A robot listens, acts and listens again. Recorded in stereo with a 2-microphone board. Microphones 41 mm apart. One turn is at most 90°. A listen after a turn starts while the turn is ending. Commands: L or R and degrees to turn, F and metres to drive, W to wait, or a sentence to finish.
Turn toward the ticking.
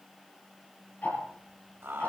L45
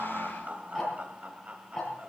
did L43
Facing the ticking.